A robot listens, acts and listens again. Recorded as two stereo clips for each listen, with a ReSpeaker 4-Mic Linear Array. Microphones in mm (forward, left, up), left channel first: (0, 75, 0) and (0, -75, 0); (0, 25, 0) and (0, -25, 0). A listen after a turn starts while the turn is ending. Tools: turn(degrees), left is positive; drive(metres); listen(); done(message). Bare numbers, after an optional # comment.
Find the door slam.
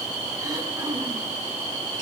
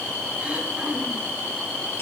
listen()
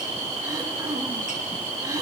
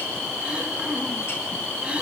listen()
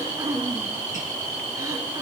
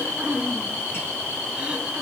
done("I can't make out a door slam, only throat clearing.")